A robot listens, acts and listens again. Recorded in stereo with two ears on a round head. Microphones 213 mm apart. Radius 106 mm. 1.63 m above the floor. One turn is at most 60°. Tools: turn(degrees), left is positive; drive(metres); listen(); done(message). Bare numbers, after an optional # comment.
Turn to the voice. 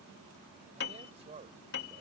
# The man speaking: about 25° right or 155° right.
turn(-25)
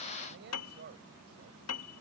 # So it is at 135° right.
turn(-60)
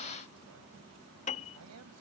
# The man speaking is now 70° right.
turn(-60)
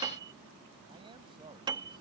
# Nothing new. It was at 10° right.
turn(-10)
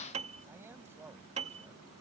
# The man speaking is now 10° right.
turn(-10)
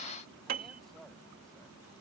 listen()
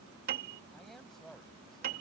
done("Facing the man speaking.")